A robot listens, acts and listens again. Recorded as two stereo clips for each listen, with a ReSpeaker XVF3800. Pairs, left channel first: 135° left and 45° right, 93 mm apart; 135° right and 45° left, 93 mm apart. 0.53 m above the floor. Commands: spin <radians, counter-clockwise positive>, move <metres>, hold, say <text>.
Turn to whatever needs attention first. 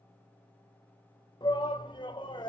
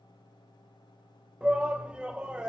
spin 2.18
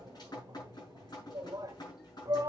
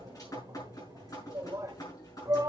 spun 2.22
say Facing the shout.